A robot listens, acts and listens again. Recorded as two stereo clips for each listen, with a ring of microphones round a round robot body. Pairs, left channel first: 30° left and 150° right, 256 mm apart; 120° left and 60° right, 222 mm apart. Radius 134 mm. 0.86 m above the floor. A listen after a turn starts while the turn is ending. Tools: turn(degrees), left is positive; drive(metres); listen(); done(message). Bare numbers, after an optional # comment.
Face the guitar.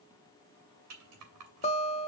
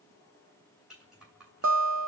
# The guitar: 35° right.
turn(-35)
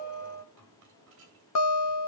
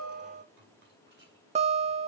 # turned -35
done("Found it: a guitar, straight ahead.")